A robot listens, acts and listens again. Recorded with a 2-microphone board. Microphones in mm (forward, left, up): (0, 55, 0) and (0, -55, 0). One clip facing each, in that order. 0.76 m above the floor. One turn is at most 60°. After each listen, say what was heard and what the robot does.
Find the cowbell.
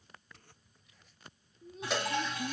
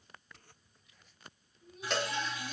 Turn 30° left.
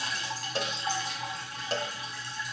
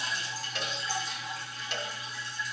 So it is at 145° left. Turn 60° left.
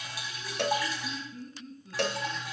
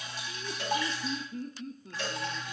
The cowbell is now 75° left. Turn 60° left.
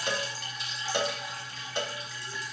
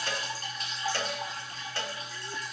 The cowbell is now 20° left. Turn 20° left.
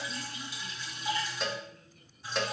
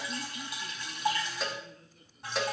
Facing the cowbell, under 1 m away.